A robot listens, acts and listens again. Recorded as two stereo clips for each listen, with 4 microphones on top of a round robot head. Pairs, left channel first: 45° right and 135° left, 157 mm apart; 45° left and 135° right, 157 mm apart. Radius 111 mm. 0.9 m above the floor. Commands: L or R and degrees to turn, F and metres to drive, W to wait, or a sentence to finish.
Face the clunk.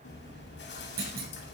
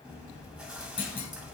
L105
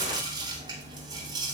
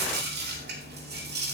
Facing where the clunk came from. I can't hear it now.